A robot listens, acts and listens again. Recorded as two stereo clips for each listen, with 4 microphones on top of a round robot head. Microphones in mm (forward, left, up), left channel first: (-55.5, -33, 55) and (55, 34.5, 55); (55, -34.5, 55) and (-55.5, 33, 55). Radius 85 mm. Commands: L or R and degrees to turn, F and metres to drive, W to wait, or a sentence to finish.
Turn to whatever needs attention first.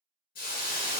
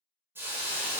W
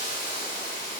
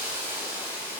W
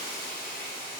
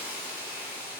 I can't make out anything urgent to turn to.